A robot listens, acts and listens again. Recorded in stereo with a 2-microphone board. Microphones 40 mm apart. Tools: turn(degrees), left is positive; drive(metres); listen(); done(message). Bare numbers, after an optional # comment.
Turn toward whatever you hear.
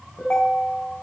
# The ringtone: about 30° left or 150° left.
turn(30)
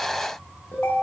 # So it is at 115° left.
turn(115)
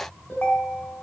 # The ringtone is now 50° left.
turn(50)
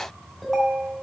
# The ringtone is now 15° left.
turn(15)
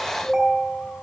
done("Facing the ringtone.")